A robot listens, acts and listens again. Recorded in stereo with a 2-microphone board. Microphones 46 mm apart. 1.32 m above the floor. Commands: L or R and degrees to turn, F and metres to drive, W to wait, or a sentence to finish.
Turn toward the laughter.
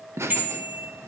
R70
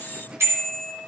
R20
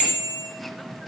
Found it: laughter, straight ahead, 1 to 2 m away.